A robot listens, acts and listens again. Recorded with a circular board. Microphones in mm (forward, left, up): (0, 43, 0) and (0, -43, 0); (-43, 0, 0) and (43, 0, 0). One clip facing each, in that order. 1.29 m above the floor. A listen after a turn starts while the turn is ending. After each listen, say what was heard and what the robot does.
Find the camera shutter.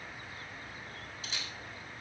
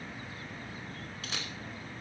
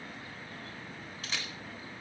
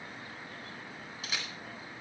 The camera shutter: 80° right. Turn 80° right.
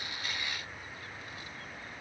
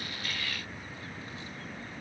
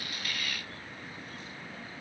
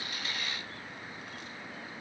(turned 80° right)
Keep listening.
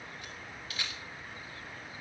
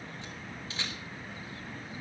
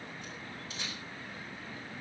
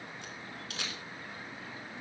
The camera shutter is now 25° right. Turn 25° right.
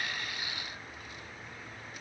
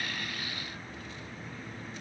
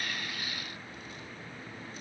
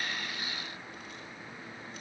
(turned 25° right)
Keep listening.
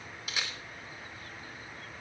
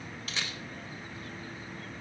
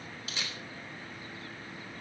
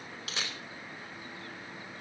The camera shutter is now 10° left. Turn 10° left.
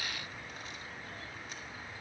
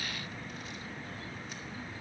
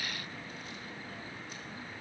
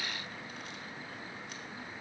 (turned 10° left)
Keep listening.
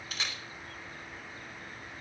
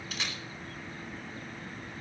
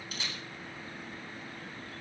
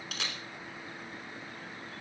Found it: a camera shutter, straight ahead.